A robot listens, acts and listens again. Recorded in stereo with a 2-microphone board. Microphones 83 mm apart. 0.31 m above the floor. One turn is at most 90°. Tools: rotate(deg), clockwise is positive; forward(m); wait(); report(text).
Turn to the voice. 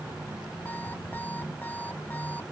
wait()
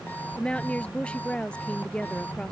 rotate(-30)
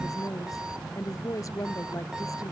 rotate(-90)
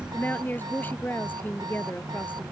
rotate(-20)
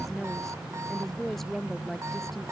report("Found it: a woman speaking, straight ahead.")